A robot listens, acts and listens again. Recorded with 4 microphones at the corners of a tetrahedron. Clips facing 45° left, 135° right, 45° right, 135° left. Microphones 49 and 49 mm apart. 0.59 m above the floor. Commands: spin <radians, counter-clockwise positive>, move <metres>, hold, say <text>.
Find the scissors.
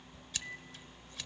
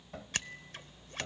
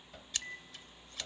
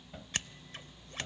spin -3.05
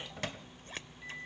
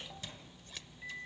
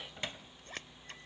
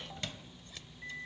say Facing the scissors, under 1 m away.